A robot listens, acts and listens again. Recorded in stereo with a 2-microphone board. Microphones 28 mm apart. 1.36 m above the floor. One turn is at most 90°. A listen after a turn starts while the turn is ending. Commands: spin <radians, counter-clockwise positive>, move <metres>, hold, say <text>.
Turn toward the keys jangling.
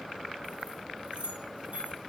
spin -1.13
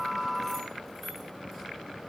hold
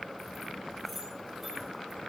hold
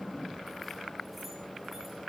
say I heard keys jangling, but can't make it out now. It was about straight ahead or 50° right.